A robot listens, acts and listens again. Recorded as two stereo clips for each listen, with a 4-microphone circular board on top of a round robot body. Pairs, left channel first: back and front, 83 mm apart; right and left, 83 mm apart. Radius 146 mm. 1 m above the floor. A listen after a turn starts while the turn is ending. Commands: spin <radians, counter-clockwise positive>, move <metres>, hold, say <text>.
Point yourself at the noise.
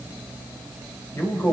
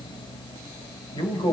spin -2.09
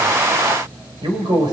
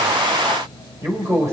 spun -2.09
spin 0.61
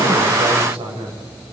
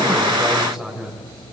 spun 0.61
say Facing the man speaking, over 4 m away.